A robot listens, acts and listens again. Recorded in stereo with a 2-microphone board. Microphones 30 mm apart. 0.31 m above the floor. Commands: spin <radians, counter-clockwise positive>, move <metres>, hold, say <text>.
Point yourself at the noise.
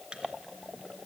spin -0.61
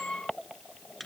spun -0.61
say Found it: a microwave, straight ahead, 2 to 4 m away.